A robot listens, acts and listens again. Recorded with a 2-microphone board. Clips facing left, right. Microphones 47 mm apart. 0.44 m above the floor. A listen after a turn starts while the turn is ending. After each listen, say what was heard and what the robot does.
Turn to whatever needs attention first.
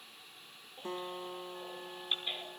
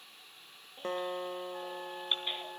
The baby crying: about 25° right or 155° right. Turn 25° right.
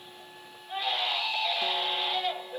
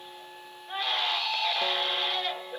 So it is at 135° right. Turn 135° right.
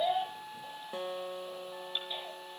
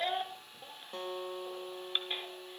The baby crying is now 45° right. Turn 45° right.
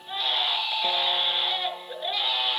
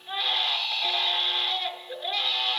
The baby crying is now 10° left. Turn 10° left.
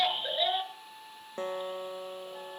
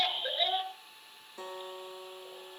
Found it: a baby crying, straight ahead, over 4 m away.